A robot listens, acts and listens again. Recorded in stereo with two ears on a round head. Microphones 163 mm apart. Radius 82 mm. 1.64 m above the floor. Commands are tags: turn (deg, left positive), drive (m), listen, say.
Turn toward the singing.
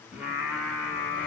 <turn deg="30"/>
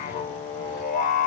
<turn deg="135"/>
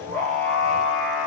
<say>Facing the singing, 1 to 2 m away.</say>